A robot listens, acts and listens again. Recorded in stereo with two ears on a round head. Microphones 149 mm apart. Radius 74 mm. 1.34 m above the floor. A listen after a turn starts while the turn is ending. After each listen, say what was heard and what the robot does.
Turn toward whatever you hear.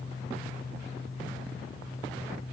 Keep listening.
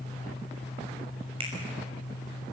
The finger snap: about 35° right or 145° right. Turn 35° right.
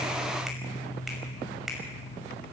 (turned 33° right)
Facing the finger snap.